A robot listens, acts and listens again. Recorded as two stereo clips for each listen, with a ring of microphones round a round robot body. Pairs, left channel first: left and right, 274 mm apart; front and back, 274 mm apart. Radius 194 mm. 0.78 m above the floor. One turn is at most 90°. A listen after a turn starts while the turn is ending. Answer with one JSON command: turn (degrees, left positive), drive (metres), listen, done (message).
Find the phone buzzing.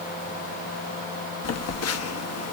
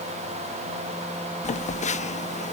{"turn": 65}
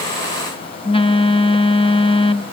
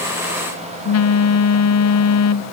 {"turn": 20}
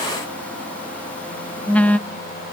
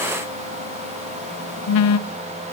{"done": "Facing the phone buzzing."}